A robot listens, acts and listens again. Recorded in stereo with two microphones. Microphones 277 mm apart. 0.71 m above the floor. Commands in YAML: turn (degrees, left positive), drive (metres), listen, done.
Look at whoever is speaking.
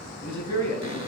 turn: 75
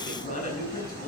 turn: 30
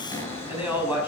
done: "Facing the man speaking."